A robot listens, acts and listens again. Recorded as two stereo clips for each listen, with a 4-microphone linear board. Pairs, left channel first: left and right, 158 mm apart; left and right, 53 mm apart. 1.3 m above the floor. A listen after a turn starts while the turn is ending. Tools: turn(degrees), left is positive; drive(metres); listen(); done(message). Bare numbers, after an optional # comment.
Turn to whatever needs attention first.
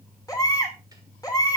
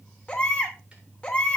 # The baby crying: about 25° left or 155° left.
turn(25)
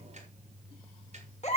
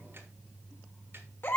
# So it is at 135° left.
turn(135)
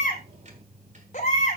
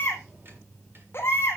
# The baby crying is now 50° left.
turn(50)
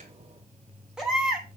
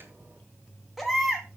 done("Found it: a baby crying, straight ahead, 2 to 4 m away.")